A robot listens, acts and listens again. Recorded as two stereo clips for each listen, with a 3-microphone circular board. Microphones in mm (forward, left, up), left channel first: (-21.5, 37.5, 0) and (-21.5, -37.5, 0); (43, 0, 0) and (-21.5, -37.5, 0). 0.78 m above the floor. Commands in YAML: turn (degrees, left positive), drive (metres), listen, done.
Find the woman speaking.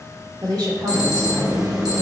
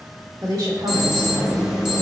turn: -120
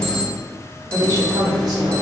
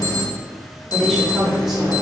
turn: -65
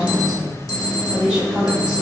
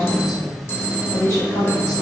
turn: -10
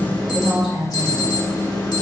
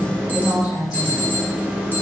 done: "Found it: a woman speaking, straight ahead."